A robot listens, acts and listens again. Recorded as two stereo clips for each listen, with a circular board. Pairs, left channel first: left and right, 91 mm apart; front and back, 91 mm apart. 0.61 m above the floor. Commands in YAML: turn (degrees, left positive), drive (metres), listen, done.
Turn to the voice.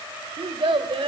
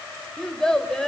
turn: -85
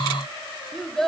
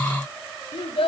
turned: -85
done: "Facing the child speaking, 1 to 2 m away."